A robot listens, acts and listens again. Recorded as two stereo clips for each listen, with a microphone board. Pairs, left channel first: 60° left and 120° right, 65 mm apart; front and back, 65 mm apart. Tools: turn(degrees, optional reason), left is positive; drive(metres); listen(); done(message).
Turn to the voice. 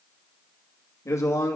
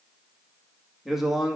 turn(degrees=95, reason="The man speaking: 95° left.")
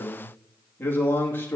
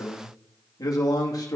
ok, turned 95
done("Found it: a man speaking, straight ahead, 2 to 4 m away.")